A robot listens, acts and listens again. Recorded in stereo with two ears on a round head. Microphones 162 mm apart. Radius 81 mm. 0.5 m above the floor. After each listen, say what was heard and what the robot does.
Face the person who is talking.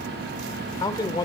The man speaking: about 20° left or 160° left. Turn 20° left.
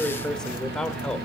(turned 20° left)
Facing the man speaking.